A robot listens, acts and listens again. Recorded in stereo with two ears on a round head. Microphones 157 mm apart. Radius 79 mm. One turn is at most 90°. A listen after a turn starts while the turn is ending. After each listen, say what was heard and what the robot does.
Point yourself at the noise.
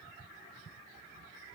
Keep listening.
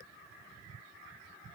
Keep listening.
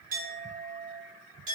The clink: about 50° right or 130° right. Turn 50° right.
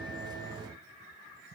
Keep listening.
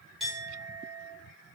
Facing the clink.